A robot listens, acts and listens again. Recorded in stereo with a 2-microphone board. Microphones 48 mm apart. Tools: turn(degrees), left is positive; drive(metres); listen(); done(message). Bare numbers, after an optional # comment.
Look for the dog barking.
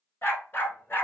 # The dog barking: about 45° left or 135° left.
turn(45)
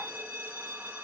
listen()
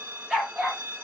# So it is at 20° right.
turn(-20)
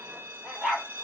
# The dog barking is now 15° right.
turn(-15)
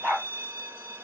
done("Facing the dog barking, 2 to 4 m away.")